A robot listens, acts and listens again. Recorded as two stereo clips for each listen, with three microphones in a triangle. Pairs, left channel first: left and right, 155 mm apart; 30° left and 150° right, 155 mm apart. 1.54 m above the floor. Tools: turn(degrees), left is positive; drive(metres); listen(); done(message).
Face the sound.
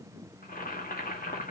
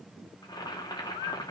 turn(degrees=90)
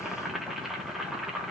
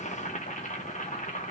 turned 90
done("Found it: boiling, straight ahead, 1 to 2 m away.")